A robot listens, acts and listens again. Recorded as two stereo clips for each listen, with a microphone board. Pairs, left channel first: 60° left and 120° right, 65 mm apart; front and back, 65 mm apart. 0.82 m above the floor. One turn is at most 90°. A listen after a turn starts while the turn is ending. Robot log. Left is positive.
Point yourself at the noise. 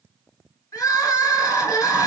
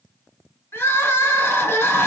note: The crying: 50° left.
cmd yaw +50
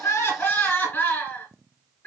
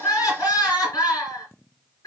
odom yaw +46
end: Facing the crying.